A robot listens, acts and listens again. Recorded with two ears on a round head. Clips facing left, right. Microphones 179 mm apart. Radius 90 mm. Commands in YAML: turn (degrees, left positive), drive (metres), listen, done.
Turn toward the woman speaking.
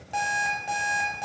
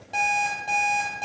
listen: true
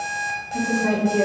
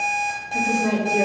turn: -30
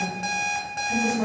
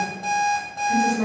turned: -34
turn: -35
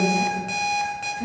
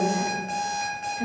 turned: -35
turn: -135
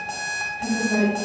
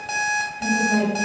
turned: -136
done: "Facing the woman speaking."